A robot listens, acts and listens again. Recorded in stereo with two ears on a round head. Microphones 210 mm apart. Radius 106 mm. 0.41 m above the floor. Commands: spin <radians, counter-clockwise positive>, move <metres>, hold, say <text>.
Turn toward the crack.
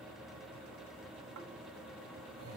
hold
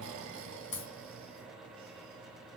spin 0.52
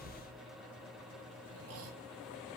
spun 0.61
hold
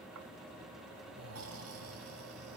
say I heard a crack, but can't make it out now. It was about 5° right or 115° left.